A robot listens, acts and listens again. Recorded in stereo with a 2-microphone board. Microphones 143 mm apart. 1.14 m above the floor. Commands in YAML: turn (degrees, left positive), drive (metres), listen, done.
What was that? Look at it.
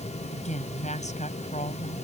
turn: 55
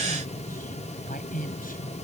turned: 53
turn: 75
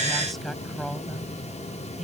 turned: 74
done: "Found it: a woman speaking, straight ahead."